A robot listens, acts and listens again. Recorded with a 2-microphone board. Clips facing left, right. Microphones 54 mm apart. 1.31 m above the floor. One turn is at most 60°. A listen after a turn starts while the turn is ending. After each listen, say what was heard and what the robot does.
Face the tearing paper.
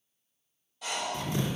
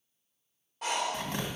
The tearing paper: about 60° right or 120° right. Turn 60° right.
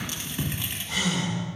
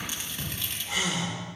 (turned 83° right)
So it is at 20° left. Turn 20° left.
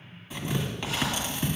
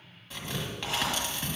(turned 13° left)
Found it: tearing paper, straight ahead, 1 to 2 m away.